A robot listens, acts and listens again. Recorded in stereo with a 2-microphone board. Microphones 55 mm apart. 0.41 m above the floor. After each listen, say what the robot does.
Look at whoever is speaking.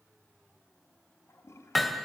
Keep listening.
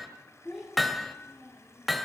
Turn 30° left.
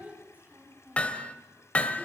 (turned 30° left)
Turn 25° right.
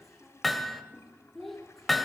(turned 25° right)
Found it: a child speaking, straight ahead, over 4 m away.